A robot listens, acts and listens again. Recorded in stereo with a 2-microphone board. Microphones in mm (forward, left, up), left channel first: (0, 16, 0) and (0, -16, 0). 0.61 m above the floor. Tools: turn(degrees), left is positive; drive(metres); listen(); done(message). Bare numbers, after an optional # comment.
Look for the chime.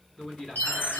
# The chime: about 75° left or 105° left.
turn(75)
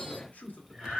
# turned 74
listen()
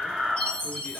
# So it is at 20° left.
turn(20)
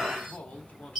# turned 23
done("Facing the chime, 2 to 4 m away.")